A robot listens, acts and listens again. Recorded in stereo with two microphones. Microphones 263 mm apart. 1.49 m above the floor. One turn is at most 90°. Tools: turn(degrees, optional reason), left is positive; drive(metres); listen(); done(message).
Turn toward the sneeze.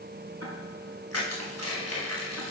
listen()
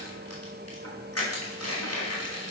listen()
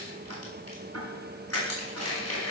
done("I can't make out a sneeze to turn to.")